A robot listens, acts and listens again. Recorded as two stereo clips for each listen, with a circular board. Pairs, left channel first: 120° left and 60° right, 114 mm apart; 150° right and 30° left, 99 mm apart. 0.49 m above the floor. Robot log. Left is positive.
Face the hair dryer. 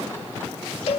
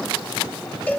cmd idle
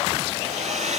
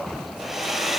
note: The hair dryer: 60° right.
cmd yaw -60
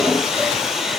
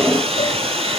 note: The hair dryer is now 30° left.
cmd yaw +30
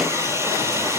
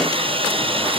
end: Facing the hair dryer, 1 to 2 m away.